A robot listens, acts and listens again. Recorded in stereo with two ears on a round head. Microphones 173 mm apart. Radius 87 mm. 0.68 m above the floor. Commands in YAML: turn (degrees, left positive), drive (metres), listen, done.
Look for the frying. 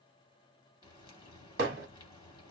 turn: 25
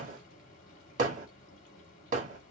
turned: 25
turn: 125
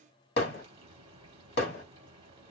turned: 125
turn: -30
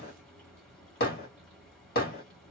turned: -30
done: "Found it: frying, straight ahead, 1 to 2 m away."